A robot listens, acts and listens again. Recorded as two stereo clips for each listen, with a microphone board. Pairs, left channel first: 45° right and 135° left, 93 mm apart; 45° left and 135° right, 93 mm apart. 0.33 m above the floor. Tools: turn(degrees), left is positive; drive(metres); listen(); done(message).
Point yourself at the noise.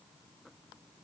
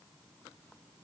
listen()
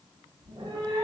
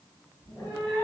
turn(degrees=115)
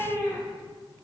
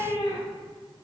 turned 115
turn(degrees=20)
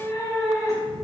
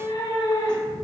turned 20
turn(degrees=10)
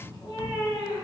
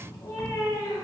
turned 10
done("Facing the cat meowing.")